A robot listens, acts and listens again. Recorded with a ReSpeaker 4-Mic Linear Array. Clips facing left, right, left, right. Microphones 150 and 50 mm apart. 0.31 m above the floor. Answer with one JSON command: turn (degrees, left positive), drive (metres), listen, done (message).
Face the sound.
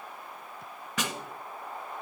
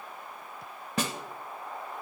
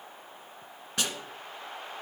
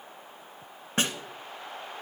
{"turn": -35}
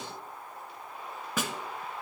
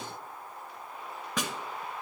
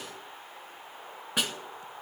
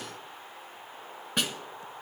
{"done": "Facing the snare drum."}